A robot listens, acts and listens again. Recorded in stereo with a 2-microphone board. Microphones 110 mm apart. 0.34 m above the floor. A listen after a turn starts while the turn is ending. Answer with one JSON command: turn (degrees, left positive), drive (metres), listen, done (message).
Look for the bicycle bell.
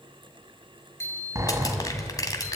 {"turn": 25}
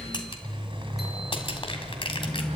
{"listen": true}
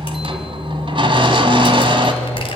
{"listen": true}
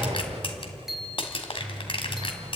{"done": "Facing the bicycle bell, 2 to 4 m away."}